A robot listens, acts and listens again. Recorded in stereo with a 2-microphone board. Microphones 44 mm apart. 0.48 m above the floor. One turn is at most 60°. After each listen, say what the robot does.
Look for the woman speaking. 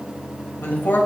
Turn 55° left.
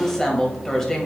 Turn 10° left.
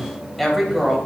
Found it: a woman speaking, straight ahead, 2 to 4 m away.